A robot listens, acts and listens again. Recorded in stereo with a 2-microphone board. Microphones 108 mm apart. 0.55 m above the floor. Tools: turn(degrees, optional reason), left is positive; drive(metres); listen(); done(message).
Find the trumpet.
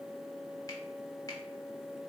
listen()
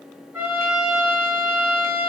turn(degrees=-15, reason="The trumpet: about 15° right or 165° right.")
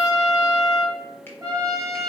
turn(degrees=-150, reason="So it is at 150° right.")
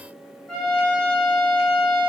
done("Found it: a trumpet, straight ahead.")